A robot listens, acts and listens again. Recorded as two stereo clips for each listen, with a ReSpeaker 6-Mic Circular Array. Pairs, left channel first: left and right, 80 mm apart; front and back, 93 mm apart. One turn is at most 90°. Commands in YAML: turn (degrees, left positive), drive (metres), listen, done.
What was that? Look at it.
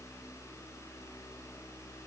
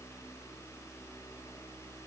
listen: true
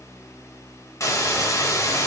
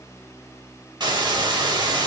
turn: 90
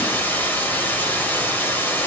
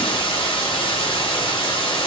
turn: 25
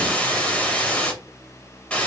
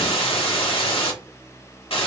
turn: 15
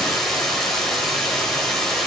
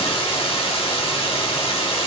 done: "Found it: a hiss, straight ahead."